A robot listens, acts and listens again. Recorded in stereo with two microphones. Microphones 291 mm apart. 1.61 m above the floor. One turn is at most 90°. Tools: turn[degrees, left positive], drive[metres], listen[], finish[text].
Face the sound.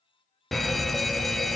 Action: turn[30]
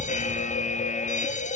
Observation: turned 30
Thought: So it is at 150° left.
Action: turn[90]
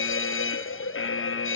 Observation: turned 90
Thought: The fire alarm is now 55° left.
Action: turn[55]
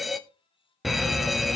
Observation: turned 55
Action: finish[Found it: a fire alarm, straight ahead.]